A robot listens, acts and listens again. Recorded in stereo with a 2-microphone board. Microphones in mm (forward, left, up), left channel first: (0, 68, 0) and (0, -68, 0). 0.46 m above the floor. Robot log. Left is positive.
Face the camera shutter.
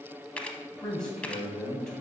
cmd yaw +30
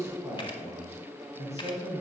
cmd idle
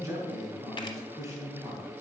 note: So it is at 140° left.
cmd yaw +140
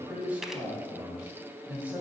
cmd idle
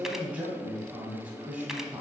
cmd idle
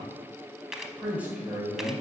end: Facing the camera shutter.